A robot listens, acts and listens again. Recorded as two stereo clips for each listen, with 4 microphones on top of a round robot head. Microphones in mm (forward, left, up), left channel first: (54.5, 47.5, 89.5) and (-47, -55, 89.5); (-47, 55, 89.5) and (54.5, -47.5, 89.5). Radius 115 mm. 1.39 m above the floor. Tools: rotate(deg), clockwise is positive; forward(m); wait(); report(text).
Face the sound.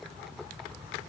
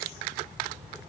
wait()
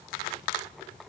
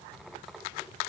wait()
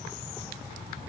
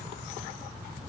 report("I can't make out anything to turn to.")